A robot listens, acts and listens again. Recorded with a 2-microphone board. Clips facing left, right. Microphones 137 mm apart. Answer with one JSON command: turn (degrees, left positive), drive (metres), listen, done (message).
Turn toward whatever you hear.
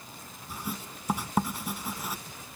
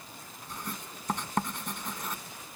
{"turn": 30}
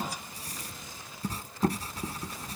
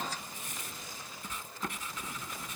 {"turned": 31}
{"turn": 140}
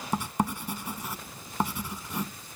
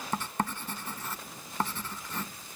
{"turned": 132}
{"turn": 10}
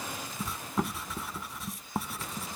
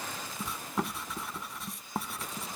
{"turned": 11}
{"done": "Found it: writing, straight ahead."}